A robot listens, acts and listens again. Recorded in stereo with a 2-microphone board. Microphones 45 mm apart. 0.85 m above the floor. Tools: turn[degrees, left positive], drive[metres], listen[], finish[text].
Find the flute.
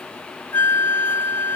Thought: The flute: about 55° left or 125° left.
Action: turn[55]
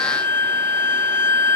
Thought: So it is at 65° left.
Action: turn[65]
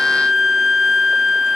Thought: The flute is now 10° right.
Action: turn[-10]
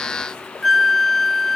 Action: finish[Found it: a flute, straight ahead.]